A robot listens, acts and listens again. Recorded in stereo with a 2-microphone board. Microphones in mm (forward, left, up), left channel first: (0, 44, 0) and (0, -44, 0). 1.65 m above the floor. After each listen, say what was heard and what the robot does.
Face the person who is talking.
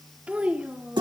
The child speaking: about 15° right or 165° right. Turn 15° right.
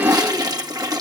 Keep listening.
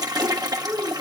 The child speaking: about 35° right or 145° right. Turn 35° right.
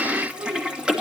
So it is at 110° right. Turn 110° right.
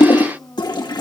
The child speaking is now 30° left. Turn 30° left.
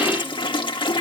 Keep listening.
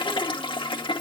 Keep listening.
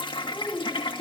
The child speaking is now 10° left. Turn 10° left.
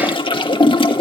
Keep listening.
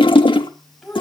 Facing the child speaking, over 4 m away.